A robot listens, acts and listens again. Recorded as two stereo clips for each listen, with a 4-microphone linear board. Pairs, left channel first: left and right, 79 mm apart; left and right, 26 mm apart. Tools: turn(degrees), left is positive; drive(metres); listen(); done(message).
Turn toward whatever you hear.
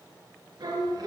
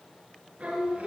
turn(degrees=-70)
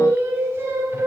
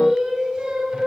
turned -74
turn(degrees=-35)
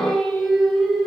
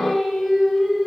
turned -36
done("Found it: singing, straight ahead.")